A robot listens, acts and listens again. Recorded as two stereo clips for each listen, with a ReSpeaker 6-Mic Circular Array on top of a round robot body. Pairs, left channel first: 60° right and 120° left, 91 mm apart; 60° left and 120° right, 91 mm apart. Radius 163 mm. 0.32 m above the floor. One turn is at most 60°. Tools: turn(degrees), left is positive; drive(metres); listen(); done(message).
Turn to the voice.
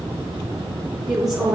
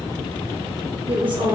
turn(degrees=-60)
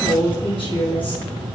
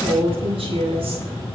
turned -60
turn(degrees=-60)
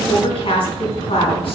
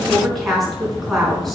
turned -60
turn(degrees=-30)
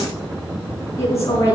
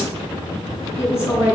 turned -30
done("Found it: a woman speaking, straight ahead.")